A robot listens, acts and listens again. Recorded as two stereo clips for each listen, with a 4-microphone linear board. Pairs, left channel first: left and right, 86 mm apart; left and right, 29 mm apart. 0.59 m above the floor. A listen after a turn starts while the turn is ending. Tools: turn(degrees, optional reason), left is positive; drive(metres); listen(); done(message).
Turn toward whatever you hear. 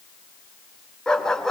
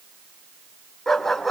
turn(degrees=30)
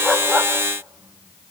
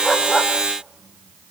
listen()
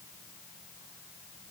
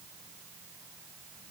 listen()
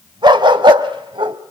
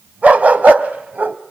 turn(degrees=-80, reason="So it is at 80° right.")
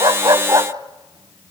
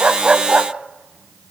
turn(degrees=-45, reason="The dog barking is now 45° right.")
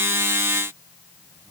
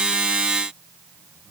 listen()
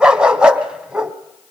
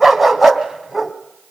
turn(degrees=-10, reason="The dog barking is now 10° right.")
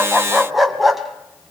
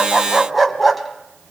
done("Found it: a dog barking, straight ahead.")